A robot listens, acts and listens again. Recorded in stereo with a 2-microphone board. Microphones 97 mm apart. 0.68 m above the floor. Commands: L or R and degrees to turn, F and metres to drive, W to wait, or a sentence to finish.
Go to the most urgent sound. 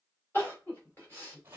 L20
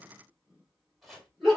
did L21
F1.0
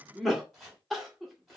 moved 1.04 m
F1.0
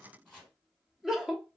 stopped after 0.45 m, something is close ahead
I am next to the crying.